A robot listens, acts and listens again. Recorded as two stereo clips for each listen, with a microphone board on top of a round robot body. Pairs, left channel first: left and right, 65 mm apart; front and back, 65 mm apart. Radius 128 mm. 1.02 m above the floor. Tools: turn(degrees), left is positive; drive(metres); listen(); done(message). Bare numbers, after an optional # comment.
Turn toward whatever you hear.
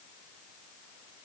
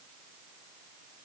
listen()
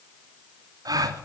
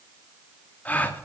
# The gasp: 65° right.
turn(-65)
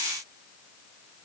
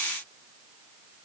done("Facing where the gasp came from. I can't hear it now.")